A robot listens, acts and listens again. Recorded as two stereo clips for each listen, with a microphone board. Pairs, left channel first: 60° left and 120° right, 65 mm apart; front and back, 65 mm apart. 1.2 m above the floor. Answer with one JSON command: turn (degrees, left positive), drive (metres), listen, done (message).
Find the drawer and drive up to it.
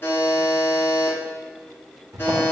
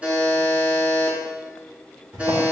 {"turn": -140}
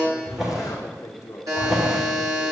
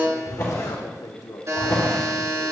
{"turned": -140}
{"turn": -35}
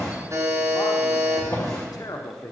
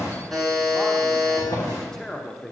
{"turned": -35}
{"turn": 20}
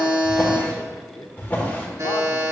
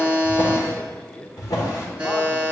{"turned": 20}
{"drive": 1.0}
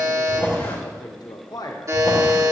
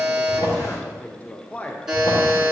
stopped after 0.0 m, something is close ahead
{"done": "Blocked. The drawer is further on, straight ahead."}